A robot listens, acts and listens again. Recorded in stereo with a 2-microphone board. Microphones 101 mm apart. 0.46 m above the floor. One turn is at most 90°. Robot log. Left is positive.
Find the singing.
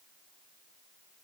cmd idle
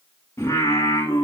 note: The singing: about 30° left or 150° left.
cmd yaw +30
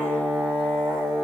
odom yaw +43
note: So it is at 10° right.
cmd yaw -10
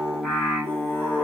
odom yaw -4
end: Found it: singing, straight ahead, over 4 m away.